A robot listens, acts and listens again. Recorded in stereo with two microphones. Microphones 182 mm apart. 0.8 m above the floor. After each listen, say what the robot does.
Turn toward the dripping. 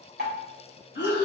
Turn 65° right.
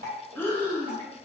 Turn 50° right.
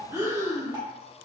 Keep listening.
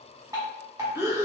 Turn 20° right.
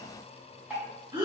Turn 10° right.
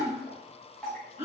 Facing the dripping.